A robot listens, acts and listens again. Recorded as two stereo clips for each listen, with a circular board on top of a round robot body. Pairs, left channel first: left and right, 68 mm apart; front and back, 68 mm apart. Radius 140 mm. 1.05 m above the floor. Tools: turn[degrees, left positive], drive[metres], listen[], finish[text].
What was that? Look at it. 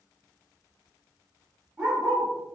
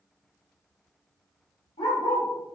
Thought: The dog barking: 10° right.
Action: turn[-10]
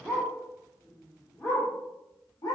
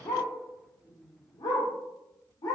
Thought: The dog barking is now 45° left.
Action: turn[45]
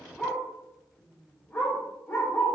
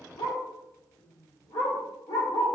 Thought: The dog barking is now 30° left.
Action: turn[30]
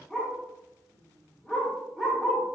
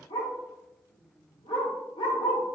Action: finish[Found it: a dog barking, straight ahead.]